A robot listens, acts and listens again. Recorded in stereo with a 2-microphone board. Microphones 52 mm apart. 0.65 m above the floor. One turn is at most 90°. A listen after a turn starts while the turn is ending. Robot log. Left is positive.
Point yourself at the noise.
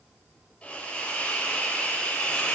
note: The hiss: about 20° left or 160° left.
cmd yaw +20
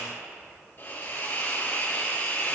note: So it is at 140° left.
cmd yaw +90
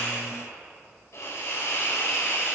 note: The hiss is now 80° left.
cmd yaw +80
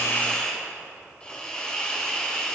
note: The hiss is now 25° left.
cmd yaw +25
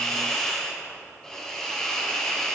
note: The hiss is now 15° left.
cmd yaw +15
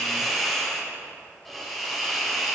end: Found it: a hiss, straight ahead, 2 to 4 m away.